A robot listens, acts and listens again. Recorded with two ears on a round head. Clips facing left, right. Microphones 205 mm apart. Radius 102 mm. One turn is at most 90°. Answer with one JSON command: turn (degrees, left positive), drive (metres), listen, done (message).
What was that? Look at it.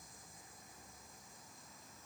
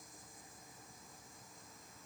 {"listen": true}
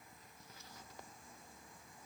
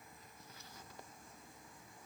{"listen": true}
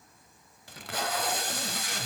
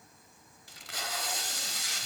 {"turn": 50}
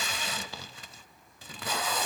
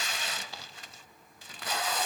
{"turn": 80}
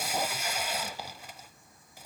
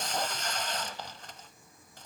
{"turn": 10}
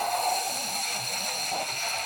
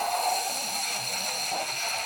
{"done": "Found it: tape being pulled, straight ahead, 1 to 2 m away."}